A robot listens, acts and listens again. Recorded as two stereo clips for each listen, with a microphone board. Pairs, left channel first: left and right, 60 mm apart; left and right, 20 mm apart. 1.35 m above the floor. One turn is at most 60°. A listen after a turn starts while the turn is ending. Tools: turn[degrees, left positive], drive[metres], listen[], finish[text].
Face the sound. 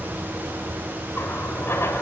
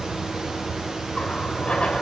Thought: The running tap: about 45° left or 135° left.
Action: turn[45]
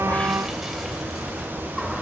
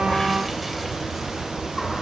Action: listen[]
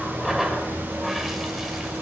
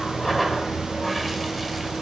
Action: finish[Found it: a running tap, straight ahead.]